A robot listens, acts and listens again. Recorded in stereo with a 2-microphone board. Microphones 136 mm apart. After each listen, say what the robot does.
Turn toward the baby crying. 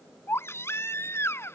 Turn 20° left.
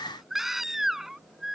Found it: a baby crying, straight ahead.